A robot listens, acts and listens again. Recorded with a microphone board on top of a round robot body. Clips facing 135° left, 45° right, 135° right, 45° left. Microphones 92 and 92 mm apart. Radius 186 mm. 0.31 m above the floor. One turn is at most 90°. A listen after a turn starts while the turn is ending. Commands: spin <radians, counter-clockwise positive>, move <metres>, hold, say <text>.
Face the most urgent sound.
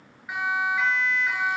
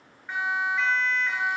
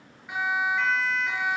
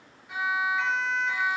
spin -1.57
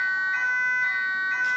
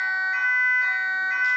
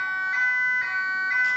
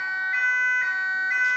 spin -0.96
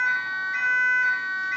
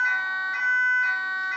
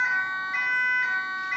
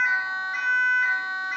spin -0.17
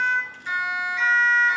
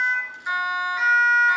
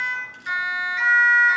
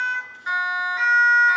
say Found it: a siren, straight ahead.